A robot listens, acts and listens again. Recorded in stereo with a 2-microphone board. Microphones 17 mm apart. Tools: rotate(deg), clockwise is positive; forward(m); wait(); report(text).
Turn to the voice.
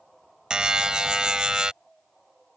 wait()
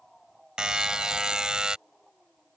wait()
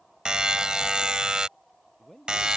rotate(-20)
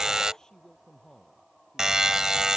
rotate(-140)
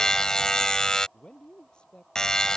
rotate(-50)
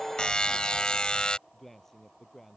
rotate(-15)
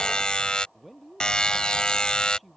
report("Facing the man speaking.")